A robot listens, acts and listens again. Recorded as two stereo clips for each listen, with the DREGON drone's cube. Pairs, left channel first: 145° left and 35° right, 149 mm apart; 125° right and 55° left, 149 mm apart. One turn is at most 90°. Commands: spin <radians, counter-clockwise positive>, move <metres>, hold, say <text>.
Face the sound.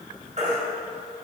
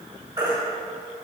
say Facing the baby crying.